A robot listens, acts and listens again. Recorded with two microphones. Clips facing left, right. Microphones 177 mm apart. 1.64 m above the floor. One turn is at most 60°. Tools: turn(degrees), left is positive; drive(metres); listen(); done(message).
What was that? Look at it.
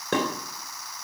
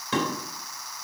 turn(degrees=60)
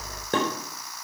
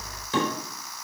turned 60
turn(degrees=60)
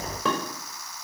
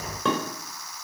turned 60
done("Facing the dishes clattering, over 4 m away.")